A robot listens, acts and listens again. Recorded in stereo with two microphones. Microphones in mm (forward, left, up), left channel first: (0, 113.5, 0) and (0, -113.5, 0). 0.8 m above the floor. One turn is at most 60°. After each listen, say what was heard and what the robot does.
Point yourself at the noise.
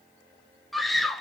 Turn 30° left.
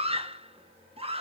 So it is at 30° right. Turn 30° right.
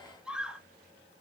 Found it: a scream, straight ahead, 1 to 2 m away.